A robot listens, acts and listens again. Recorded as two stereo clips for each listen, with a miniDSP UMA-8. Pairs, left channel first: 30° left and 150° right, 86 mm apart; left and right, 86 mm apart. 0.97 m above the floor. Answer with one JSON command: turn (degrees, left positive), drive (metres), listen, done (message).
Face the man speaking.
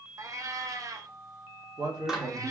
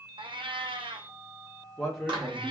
{"turn": -175}
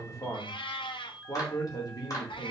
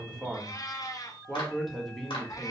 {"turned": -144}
{"turn": 10}
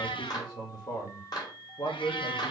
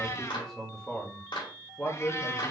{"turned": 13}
{"turn": 10}
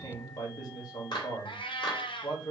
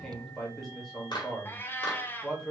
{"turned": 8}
{"done": "Found it: a man speaking, straight ahead, 2 to 4 m away."}